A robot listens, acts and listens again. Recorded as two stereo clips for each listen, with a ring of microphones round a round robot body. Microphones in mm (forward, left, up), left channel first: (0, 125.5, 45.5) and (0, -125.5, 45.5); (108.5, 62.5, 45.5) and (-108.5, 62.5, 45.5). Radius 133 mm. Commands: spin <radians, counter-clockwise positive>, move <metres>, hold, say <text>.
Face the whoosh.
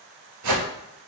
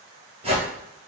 spin -1.92
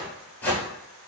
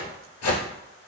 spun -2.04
say Found it: a whoosh, straight ahead, 1 to 2 m away.